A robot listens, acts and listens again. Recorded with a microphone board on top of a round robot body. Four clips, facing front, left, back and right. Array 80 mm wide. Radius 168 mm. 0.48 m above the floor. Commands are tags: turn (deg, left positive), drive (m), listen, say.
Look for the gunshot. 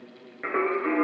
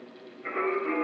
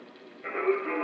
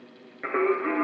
<listen/>
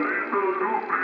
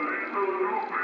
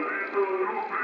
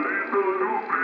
<listen/>
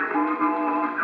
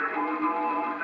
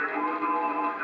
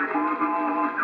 <say>I can't make out a gunshot to turn to.</say>